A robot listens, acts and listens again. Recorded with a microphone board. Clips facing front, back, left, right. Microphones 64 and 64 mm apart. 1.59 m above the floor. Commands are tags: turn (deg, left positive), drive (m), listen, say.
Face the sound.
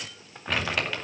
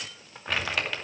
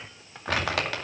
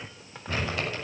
<turn deg="90"/>
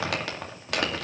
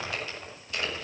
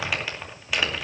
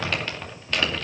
<say>Found it: crumpling, straight ahead.</say>